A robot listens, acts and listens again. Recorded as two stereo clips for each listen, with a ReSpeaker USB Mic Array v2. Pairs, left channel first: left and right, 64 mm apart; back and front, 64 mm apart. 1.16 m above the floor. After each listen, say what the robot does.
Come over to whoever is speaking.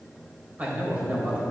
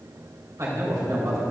Turn 25° right.
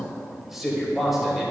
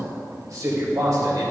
Drive 1.0 m forward.
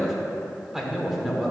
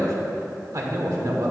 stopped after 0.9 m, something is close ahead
Arrived at the man speaking, straight ahead.